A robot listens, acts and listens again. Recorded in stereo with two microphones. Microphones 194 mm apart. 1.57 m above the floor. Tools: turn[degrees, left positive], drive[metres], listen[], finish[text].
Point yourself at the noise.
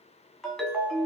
Action: turn[30]
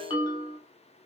Thought: So it is at 150° left.
Action: turn[150]
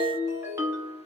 Thought: The ringtone is now 15° right.
Action: turn[-15]
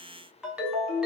Action: finish[Facing the ringtone.]